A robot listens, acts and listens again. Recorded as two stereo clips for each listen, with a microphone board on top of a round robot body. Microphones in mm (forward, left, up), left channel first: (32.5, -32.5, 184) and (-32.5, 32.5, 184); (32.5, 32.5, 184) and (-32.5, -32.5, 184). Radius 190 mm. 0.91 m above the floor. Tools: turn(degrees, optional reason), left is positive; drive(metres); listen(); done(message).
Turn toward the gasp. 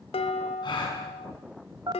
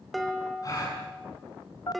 done("Facing the gasp.")